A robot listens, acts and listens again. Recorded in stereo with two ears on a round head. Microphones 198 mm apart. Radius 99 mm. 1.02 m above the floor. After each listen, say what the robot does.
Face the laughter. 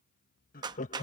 Turn 30° left.
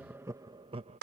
Turn 25° right.
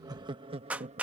Turn 30° right.
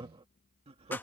Turn 30° right.
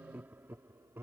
Turn 10° right.
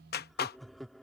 Facing the laughter.